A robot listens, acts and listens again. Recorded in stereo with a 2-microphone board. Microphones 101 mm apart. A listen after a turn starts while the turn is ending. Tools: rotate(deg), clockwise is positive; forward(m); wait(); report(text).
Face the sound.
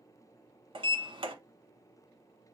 rotate(60)
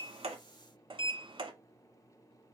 rotate(60)
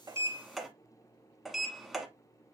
report("Facing the sliding door.")